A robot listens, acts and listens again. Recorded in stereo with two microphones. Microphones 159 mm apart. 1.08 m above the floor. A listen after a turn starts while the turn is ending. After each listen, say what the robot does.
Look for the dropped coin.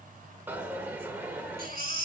Turn 30° right.
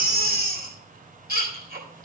Keep listening.
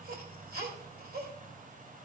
I heard a dropped coin, but can't make it out now. It was about 20° left or 140° right.